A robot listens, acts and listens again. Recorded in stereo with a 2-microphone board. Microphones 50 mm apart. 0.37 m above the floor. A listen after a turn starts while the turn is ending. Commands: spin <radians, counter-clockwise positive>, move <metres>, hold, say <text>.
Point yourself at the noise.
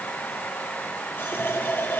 spin 0.79
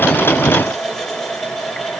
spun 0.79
say Found it: a running tap, straight ahead.